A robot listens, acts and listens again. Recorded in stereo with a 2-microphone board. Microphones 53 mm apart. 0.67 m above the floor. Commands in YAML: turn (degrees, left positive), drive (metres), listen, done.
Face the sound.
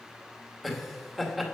turn: 30
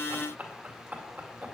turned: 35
turn: -35
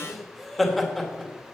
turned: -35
done: "Facing the laughter."